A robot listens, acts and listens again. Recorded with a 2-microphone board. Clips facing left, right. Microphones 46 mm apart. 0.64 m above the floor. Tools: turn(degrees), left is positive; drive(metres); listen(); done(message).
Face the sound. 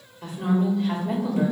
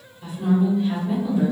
turn(degrees=75)
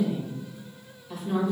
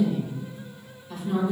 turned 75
done("Facing the woman speaking, 2 to 4 m away.")